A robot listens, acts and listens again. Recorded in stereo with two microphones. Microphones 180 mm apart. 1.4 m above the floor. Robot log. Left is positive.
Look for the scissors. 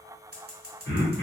note: The scissors: about 60° right or 120° right.
cmd yaw -60
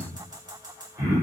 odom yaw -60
note: So it is at 30° right.
cmd yaw -30
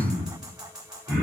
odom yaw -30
end: Found it: scissors, straight ahead.